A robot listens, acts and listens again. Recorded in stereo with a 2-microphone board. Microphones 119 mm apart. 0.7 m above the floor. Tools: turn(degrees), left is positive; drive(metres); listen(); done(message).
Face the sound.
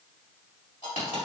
turn(degrees=70)
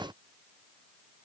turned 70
listen()
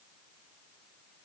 done("I heard a dropped coin, but can't make it out now. It was about straight ahead or 40° left.")